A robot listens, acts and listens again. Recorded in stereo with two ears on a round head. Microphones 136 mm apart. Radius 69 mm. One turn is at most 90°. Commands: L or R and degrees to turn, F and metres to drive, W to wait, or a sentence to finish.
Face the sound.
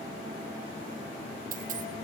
R60
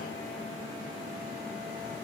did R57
W
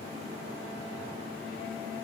I heard a dropped coin, but can't make it out now. It was about 5° right or 60° right.